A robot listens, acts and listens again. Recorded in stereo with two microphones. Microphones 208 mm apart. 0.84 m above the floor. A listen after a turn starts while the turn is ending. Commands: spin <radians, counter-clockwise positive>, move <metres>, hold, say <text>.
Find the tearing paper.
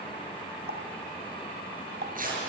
spin -0.70
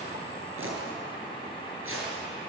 spin -1.66
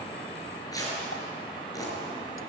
spin 0.26
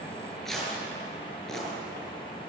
say Found it: tearing paper, straight ahead, over 4 m away.